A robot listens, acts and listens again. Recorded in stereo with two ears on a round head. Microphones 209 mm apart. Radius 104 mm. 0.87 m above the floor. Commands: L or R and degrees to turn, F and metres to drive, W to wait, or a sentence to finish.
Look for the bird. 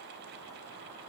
W
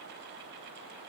W
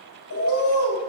L60
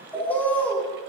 Found it: a bird, straight ahead.